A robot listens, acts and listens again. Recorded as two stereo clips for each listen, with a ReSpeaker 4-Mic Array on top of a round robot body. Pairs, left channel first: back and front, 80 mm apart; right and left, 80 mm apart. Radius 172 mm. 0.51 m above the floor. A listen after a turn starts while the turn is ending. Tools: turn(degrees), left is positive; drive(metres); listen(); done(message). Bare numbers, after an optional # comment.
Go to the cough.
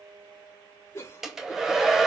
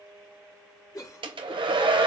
# The cough: 130° right.
turn(-130)
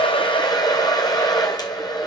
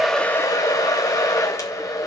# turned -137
# Nothing new. It was at 10° left.
turn(10)
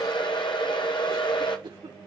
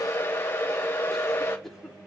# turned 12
drive(1.0)
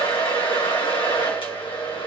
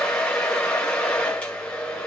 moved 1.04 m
listen()
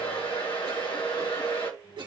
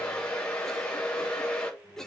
drive(1.0)
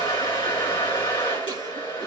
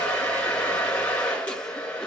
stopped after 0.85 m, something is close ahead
listen()
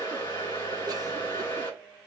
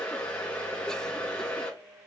listen()
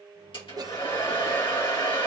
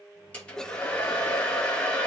# The cough is now 10° right.
turn(-10)
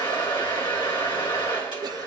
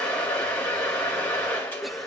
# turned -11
listen()
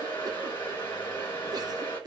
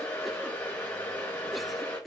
done("Arrived at the cough, straight ahead.")